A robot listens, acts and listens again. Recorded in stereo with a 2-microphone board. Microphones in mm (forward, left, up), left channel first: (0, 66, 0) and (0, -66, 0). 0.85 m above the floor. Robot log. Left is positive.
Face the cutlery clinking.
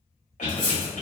note: The cutlery clinking: about 40° left or 140° left.
cmd yaw +40
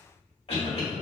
cmd idle
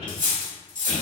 note: So it is at 100° left.
cmd yaw +100
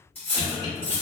note: The cutlery clinking is now 15° left.
cmd yaw +15
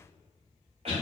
cmd idle
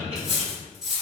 end: Facing the cutlery clinking.